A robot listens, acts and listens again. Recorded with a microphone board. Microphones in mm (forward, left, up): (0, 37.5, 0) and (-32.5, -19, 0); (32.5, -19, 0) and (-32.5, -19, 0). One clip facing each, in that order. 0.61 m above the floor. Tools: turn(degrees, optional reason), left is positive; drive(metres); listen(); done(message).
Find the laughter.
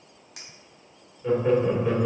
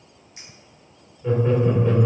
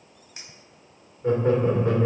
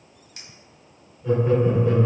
turn(degrees=-20, reason="The laughter: 20° right.")
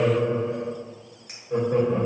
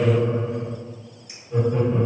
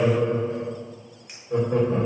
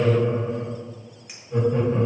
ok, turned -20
turn(degrees=35, reason="The laughter is now 35° left.")
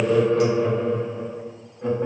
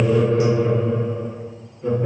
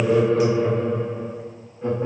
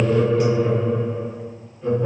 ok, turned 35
turn(degrees=35, reason="The laughter is now 35° left.")
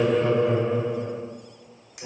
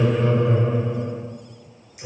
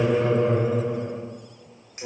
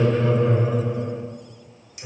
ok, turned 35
done("Facing the laughter, over 4 m away.")